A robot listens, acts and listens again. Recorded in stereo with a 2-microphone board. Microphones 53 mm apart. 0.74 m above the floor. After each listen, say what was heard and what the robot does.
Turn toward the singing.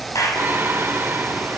The singing: about 40° right or 140° right. Turn 40° right.
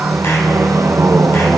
So it is at 95° right. Turn 95° right.
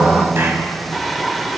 Facing the singing, 2 to 4 m away.